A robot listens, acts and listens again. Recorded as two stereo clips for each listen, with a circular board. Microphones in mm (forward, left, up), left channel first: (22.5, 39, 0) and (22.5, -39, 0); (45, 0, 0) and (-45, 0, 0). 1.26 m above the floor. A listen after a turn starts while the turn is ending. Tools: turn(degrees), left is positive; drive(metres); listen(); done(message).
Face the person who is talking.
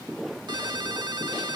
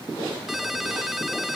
listen()
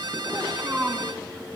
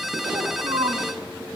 turn(degrees=-155)
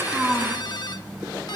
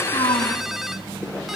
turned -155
listen()
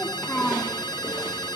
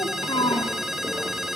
turn(degrees=35)
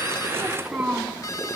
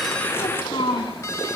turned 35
turn(degrees=-10)
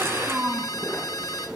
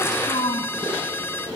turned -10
done("Found it: a child speaking, straight ahead.")